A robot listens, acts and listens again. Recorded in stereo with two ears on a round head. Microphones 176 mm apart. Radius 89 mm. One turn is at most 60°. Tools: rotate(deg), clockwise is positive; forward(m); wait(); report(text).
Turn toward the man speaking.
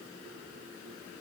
wait()
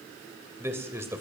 rotate(30)
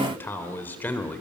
rotate(-10)
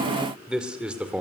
report("Found it: a man speaking, straight ahead, 1 to 2 m away.")